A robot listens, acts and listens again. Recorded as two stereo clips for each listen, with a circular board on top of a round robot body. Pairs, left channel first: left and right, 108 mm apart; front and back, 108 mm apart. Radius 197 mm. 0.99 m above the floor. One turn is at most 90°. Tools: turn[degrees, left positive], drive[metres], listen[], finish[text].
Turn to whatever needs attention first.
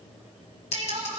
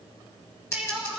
Thought: The crying: 100° right.
Action: turn[-90]
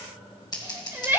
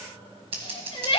Thought: The crying is now 20° right.
Action: turn[-20]
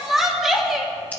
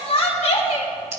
Action: finish[Found it: crying, straight ahead.]